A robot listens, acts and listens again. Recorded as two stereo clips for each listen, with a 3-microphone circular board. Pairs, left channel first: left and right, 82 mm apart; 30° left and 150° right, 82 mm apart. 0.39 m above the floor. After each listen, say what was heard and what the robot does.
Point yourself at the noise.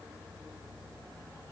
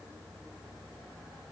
Keep listening.
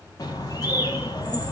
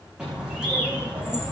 The bird: 130° left. Turn 130° left.
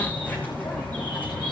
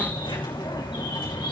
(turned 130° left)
The bird is now 25° left. Turn 25° left.
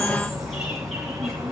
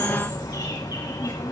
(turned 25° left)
Facing the bird, over 4 m away.